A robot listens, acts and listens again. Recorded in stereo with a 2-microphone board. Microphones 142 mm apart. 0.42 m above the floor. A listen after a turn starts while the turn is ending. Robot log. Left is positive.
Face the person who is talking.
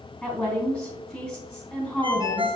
cmd yaw +30
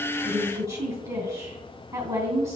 note: So it is at 25° right.
cmd yaw -25
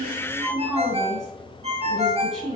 end: Facing the woman speaking, 2 to 4 m away.